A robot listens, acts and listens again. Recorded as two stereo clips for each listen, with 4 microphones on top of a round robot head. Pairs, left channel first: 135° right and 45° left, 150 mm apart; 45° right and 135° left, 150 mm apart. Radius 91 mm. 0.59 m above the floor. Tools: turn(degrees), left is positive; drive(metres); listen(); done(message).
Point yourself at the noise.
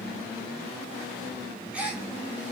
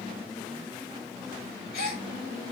turn(degrees=-40)
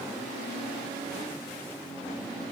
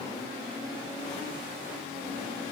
done("Facing where the gasp came from. I can't hear it now.")